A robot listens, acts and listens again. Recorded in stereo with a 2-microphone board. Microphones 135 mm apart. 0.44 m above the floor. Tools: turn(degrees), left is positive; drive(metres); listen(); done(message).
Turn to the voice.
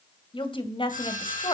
turn(degrees=40)
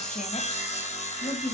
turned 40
turn(degrees=110)
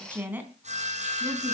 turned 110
turn(degrees=-15)
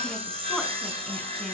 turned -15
listen()
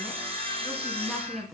done("Found it: a woman speaking, straight ahead.")